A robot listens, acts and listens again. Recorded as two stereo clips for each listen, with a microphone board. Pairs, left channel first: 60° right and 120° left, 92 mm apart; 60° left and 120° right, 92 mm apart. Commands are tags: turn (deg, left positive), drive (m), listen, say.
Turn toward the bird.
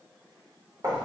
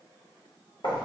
<listen/>
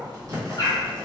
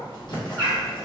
<say>Facing the bird.</say>